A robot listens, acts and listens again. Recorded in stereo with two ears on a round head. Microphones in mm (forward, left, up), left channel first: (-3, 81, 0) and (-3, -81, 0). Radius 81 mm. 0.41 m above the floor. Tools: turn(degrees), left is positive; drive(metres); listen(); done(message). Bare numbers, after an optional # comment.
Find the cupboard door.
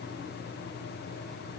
listen()
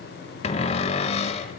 # The cupboard door: about 35° left or 145° left.
turn(35)
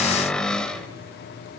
done("Facing the cupboard door, 1 to 2 m away.")